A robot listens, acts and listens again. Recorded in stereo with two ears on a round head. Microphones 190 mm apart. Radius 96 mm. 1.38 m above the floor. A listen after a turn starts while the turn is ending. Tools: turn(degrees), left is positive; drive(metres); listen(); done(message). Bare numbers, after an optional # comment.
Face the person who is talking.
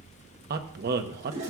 # The man speaking: about 50° right or 130° right.
turn(-50)
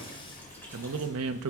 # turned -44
# So it is at 85° right.
turn(-85)
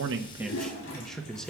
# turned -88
done("Found it: a man speaking, straight ahead.")